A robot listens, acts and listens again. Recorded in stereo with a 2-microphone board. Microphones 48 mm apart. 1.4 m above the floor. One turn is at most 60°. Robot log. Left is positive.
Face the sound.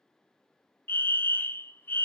note: The fire alarm: about 45° left or 135° left.
cmd yaw +45
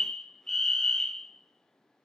note: So it is at 10° left.
cmd yaw +10
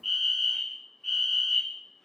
end: Found it: a fire alarm, straight ahead, 1 to 2 m away.